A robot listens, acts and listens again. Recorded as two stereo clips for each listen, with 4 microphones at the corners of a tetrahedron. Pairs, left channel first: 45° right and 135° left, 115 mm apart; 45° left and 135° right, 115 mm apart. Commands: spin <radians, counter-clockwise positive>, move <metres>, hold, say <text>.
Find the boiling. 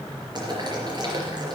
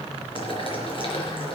spin 1.48
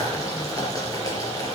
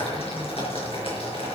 spin 0.26
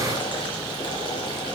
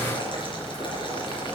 say Facing the boiling.